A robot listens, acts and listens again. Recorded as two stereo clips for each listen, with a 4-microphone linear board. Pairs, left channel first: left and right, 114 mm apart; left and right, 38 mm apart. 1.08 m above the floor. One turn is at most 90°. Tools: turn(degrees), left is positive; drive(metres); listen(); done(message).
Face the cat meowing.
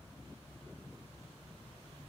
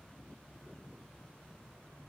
listen()
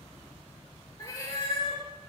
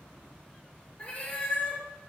turn(degrees=40)
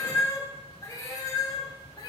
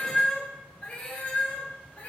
turn(degrees=40)
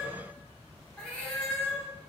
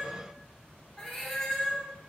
turn(degrees=10)
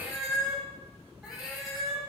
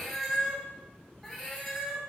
done("Found it: a cat meowing, straight ahead.")